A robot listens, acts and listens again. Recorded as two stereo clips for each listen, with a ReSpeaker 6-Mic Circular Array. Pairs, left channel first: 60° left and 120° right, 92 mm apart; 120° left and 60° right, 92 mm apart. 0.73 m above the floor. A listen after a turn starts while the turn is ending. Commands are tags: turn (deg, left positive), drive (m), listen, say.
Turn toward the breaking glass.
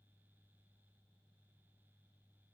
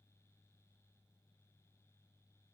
<listen/>
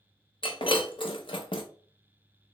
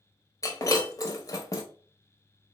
<turn deg="70"/>
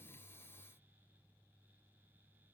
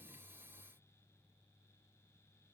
<say>I heard breaking glass from this way, but can't make it out now.</say>